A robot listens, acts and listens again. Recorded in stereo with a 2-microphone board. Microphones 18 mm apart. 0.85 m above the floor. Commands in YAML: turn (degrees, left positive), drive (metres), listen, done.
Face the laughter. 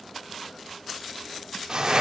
listen: true
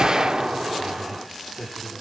turn: 30
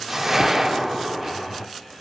turn: 135
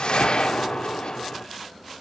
listen: true
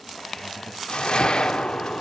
turn: 10
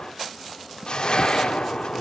listen: true
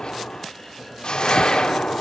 listen: true
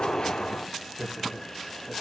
done: "Facing the laughter, over 4 m away."